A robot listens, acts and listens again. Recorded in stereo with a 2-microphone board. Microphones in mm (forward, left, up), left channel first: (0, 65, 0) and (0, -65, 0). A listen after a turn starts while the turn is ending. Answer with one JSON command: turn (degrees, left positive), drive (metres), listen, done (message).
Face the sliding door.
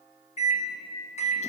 {"listen": true}
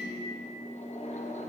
{"listen": true}
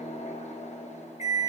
{"done": "I can't make out a sliding door to turn to."}